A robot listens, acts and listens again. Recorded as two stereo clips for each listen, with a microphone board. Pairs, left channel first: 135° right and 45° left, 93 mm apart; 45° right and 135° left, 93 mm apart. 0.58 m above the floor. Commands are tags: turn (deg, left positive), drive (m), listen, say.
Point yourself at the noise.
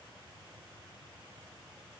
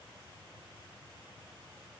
<listen/>
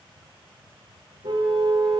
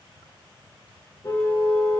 <turn deg="10"/>
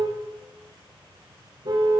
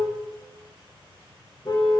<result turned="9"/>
<say>Found it: a car horn, straight ahead, 2 to 4 m away.</say>